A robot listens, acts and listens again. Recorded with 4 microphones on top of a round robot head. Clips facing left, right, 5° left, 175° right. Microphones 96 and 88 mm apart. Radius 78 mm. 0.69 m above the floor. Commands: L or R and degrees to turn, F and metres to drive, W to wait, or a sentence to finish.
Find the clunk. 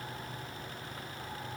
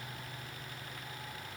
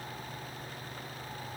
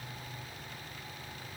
W
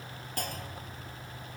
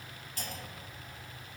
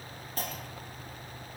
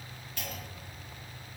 L55
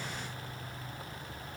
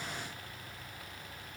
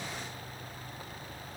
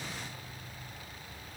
I heard a clunk from this way, but can't make it out now.